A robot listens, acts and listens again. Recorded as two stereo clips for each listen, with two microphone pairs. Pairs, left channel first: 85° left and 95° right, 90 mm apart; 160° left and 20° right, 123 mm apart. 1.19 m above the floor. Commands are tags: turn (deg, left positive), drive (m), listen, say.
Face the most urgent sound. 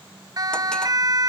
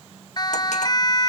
<turn deg="-145"/>
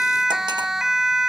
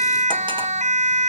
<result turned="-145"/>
<turn deg="-10"/>
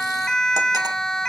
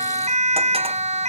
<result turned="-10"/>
<say>Found it: a siren, straight ahead.</say>